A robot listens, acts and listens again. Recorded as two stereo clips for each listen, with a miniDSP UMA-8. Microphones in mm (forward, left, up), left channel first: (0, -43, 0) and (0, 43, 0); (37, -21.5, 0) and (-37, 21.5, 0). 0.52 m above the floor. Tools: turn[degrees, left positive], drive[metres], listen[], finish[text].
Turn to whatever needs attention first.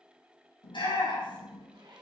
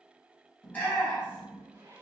Thought: The shout: 100° right.
Action: turn[-100]
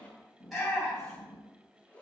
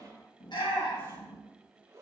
Action: finish[Facing the shout.]